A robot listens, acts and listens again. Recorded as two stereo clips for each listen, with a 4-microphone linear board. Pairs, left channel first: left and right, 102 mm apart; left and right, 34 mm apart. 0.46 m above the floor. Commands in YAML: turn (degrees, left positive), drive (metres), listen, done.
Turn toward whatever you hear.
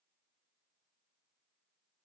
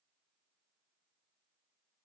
listen: true
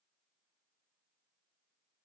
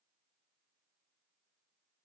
listen: true
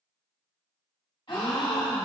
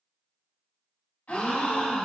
turn: 55
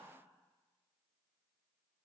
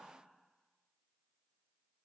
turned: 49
listen: true
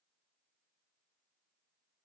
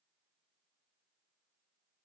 done: "I heard a gasp, but can't make it out now. It was about 5° left or 80° left."